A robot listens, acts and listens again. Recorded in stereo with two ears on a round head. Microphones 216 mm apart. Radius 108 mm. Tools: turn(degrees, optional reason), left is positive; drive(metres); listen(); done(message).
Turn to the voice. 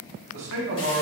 turn(degrees=-55, reason="The man speaking: about 55° right or 125° right.")
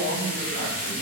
turn(degrees=-55, reason="So it is at 55° right.")
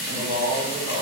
turn(degrees=-25, reason="The man speaking is now 25° right.")
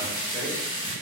listen()
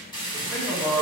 done("Found it: a man speaking, straight ahead.")